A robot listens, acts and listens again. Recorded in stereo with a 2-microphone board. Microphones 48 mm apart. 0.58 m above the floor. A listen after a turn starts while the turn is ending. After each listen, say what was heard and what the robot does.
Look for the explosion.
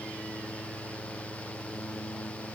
Keep listening.
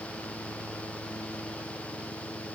Keep listening.
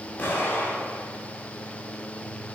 The explosion: about 35° left or 145° left. Turn 35° left.
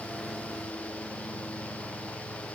Keep listening.
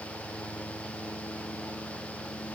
I heard an explosion, but can't make it out now. It was about straight ahead or 110° left.